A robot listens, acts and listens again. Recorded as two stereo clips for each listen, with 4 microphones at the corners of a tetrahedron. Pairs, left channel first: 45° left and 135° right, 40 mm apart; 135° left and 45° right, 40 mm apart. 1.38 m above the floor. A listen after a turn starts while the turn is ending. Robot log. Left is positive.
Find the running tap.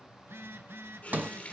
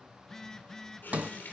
note: The running tap: 100° left.
cmd yaw +100
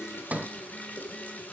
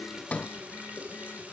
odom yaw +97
end: Facing the running tap, 2 to 4 m away.